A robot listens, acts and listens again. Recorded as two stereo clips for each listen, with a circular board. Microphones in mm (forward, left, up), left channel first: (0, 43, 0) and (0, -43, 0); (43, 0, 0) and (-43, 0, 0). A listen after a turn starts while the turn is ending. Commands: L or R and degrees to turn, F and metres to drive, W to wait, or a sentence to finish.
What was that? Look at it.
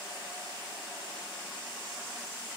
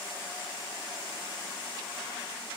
W
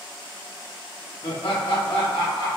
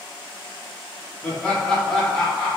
L90
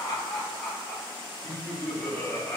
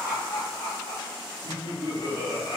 L10
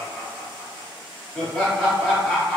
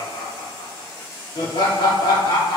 Found it: laughter, straight ahead.